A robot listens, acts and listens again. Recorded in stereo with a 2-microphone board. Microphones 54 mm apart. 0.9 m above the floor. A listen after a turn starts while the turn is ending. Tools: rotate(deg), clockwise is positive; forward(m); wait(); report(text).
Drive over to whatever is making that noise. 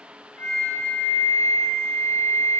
rotate(-60)
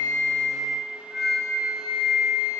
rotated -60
forward(1.0)
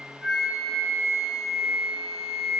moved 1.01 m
forward(1.0)
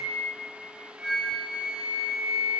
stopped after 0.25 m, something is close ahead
rotate(10)
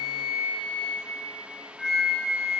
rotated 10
report("Arrived at the flute, straight ahead.")